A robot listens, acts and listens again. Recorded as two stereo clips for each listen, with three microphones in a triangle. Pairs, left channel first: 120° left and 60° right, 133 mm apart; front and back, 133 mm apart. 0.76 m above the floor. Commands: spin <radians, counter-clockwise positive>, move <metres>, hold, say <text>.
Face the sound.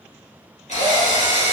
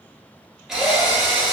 spin 1.66
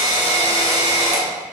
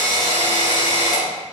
say Facing the drill.